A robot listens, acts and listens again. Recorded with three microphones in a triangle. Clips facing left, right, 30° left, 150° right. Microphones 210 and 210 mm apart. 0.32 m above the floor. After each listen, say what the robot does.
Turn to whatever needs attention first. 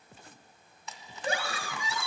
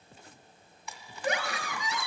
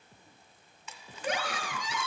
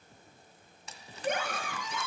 Turn 35° left.
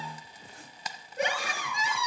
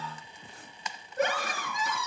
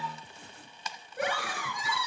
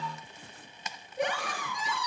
Turn 15° left.
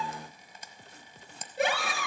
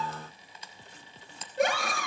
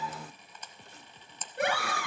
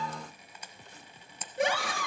Facing the scream.